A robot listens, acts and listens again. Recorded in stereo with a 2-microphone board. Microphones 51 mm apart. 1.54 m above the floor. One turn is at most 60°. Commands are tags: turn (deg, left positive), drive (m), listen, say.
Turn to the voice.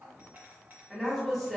<turn deg="30"/>
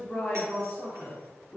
<turn deg="60"/>
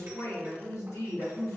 <turn deg="60"/>
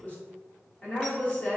<turn deg="30"/>
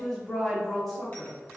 <say>Found it: a woman speaking, straight ahead.</say>